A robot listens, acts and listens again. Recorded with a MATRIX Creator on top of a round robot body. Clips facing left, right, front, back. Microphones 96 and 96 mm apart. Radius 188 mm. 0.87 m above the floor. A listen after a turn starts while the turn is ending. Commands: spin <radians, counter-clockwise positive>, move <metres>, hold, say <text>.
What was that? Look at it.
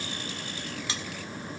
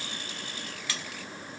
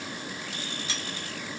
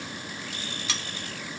spin 2.79
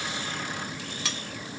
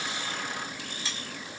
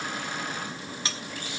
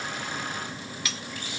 spin 1.05
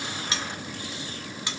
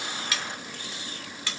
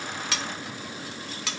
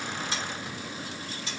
spin 0.26
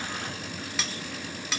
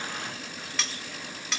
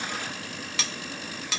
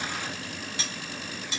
say Found it: cutlery clinking, straight ahead, under 1 m away.